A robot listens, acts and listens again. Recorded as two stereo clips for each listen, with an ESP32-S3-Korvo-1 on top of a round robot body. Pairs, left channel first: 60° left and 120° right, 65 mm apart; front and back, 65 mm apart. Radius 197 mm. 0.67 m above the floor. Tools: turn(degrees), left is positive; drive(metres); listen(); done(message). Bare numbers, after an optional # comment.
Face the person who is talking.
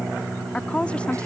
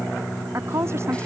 # The woman speaking: 135° left.
turn(135)
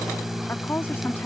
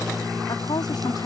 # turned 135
done("Found it: a woman speaking, straight ahead.")